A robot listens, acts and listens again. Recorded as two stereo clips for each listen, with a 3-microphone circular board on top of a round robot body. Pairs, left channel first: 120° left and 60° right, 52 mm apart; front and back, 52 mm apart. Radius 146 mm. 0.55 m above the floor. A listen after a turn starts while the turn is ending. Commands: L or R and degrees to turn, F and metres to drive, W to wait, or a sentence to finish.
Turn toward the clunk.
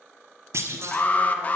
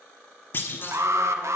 R40
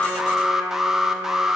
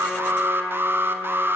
Facing where the clunk came from. I can't hear it now.